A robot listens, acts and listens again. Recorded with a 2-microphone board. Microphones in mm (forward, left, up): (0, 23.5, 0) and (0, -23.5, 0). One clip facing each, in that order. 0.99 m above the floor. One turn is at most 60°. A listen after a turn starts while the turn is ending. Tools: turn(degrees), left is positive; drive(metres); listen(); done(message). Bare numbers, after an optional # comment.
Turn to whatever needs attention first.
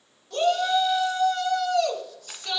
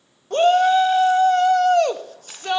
# The shout: about 45° right or 135° right.
turn(-45)
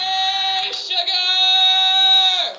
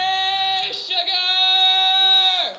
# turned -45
done("Found it: a shout, straight ahead.")